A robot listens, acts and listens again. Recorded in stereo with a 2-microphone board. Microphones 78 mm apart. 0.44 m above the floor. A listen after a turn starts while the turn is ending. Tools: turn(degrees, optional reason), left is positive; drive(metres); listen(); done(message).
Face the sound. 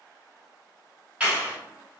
turn(degrees=-30)
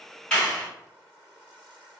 turn(degrees=15, reason="So it is at 15° left.")
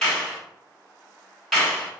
done("Found it: a clap, straight ahead.")